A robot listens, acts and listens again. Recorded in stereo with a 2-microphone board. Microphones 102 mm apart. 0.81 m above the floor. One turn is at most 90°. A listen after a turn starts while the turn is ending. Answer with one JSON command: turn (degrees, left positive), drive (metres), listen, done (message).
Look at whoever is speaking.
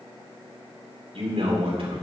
{"turn": -70}
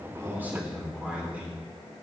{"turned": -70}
{"turn": -15}
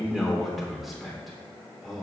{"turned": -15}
{"done": "Found it: a man speaking, straight ahead, 2 to 4 m away."}